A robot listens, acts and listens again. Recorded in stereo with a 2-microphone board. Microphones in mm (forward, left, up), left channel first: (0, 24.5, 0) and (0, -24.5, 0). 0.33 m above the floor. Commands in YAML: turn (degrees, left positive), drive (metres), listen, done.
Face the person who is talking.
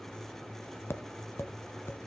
listen: true
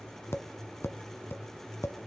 listen: true
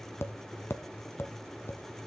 done: "I can't make out anyone speaking, only tapping."